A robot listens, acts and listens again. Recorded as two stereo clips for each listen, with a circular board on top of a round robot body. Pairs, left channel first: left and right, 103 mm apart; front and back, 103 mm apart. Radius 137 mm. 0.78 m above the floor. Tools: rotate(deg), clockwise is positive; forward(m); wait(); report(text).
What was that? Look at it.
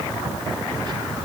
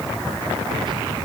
wait()
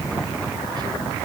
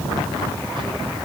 wait()
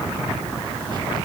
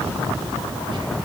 report("I can't make out anything to turn to.")